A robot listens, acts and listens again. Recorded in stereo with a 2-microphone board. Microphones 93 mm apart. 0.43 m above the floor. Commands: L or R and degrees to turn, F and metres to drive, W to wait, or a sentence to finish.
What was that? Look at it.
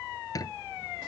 L40
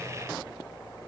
W
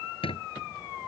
L100
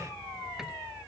W
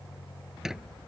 Found it: a squeak, straight ahead.